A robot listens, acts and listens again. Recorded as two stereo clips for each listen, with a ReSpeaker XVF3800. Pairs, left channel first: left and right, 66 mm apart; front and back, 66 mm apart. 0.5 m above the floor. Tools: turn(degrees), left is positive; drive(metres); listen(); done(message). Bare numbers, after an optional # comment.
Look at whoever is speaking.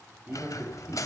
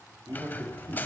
# The man speaking: 155° right.
turn(-155)
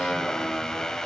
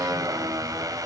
listen()
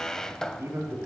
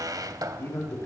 # The man speaking is now 45° right.
turn(-45)
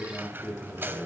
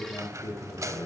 done("Found it: a man speaking, straight ahead, over 4 m away.")